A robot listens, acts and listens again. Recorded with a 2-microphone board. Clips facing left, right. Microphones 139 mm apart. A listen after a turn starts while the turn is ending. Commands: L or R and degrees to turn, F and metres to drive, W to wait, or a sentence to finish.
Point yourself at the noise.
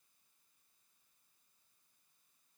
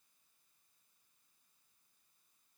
W
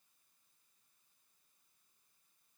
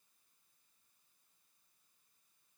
W
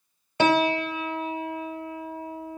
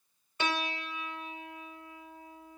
L90
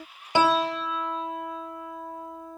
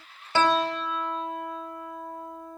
Found it: a piano, straight ahead.